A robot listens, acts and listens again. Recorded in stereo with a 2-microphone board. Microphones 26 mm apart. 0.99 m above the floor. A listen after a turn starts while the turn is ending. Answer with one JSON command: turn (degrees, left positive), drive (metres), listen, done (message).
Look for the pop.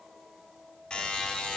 {"listen": true}
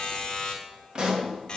{"turn": -40}
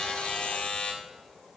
{"listen": true}
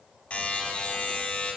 {"done": "I heard a pop, but can't make it out now. It was about straight ahead or 100° right."}